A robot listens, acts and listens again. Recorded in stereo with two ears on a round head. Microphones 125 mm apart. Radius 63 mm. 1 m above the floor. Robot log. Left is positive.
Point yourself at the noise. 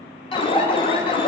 note: The alarm: about 35° left or 145° left.
cmd yaw +35
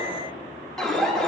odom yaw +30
end: Facing the alarm.